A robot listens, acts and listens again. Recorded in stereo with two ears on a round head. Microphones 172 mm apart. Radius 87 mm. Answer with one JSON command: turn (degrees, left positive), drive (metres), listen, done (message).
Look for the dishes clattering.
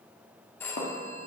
{"turn": 40}
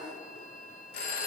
{"listen": true}
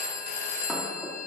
{"listen": true}
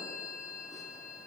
{"done": "I heard dishes clattering, but can't make it out now. It was about straight ahead or 100° left."}